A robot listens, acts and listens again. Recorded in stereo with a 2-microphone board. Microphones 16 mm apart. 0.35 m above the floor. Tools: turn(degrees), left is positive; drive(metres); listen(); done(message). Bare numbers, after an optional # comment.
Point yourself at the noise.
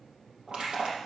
# The crushing: about 50° right or 130° right.
turn(-50)
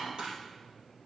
# So it is at 75° right.
turn(-75)
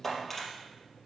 done("Facing the crushing, 2 to 4 m away.")